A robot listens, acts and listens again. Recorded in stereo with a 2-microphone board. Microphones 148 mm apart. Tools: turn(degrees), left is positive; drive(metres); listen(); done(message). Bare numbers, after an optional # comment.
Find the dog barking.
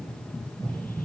listen()
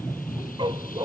# The dog barking: about 30° right or 150° right.
turn(-30)
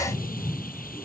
listen()
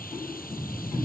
listen()
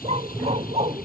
# So it is at 135° right.
turn(-135)
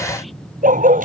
# The dog barking is now 70° right.
turn(-70)
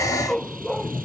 done("Found it: a dog barking, straight ahead.")